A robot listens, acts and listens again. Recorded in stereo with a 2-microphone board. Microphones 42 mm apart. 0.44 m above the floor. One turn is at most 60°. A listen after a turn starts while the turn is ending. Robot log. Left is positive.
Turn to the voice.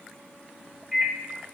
cmd idle
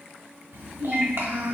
note: The child speaking: about 65° right or 115° right.
cmd yaw -60
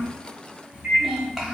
note: So it is at 10° right.
cmd yaw -10
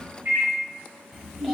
end: Facing the child speaking.